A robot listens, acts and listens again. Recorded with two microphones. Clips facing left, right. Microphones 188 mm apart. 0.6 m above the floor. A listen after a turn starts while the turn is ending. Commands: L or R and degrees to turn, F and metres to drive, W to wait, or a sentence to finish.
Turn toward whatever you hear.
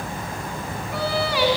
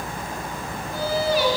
L90
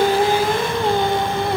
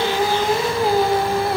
Found it: singing, straight ahead, 1 to 2 m away.